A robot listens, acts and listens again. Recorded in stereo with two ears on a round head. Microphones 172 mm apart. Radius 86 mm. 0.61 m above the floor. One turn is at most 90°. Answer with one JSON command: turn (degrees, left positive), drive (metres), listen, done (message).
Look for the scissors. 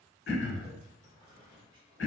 {"listen": true}
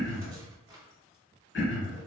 {"listen": true}
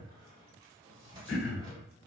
{"done": "I can't make out scissors, only a squeak and throat clearing."}